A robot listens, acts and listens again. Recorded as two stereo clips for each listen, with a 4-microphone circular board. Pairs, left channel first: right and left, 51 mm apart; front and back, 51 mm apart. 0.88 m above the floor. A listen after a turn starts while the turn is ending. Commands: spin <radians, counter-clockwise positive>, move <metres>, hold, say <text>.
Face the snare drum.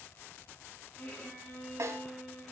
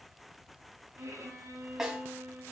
spin 1.75
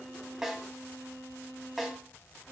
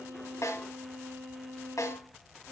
say Facing the snare drum.